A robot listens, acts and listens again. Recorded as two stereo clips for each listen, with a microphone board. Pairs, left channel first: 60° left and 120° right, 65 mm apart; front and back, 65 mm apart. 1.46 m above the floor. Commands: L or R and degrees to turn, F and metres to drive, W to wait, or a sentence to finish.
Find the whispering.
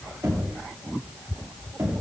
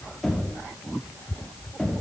W
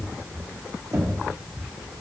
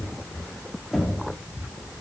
W
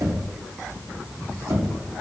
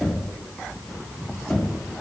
I can't make out whispering, only knocking.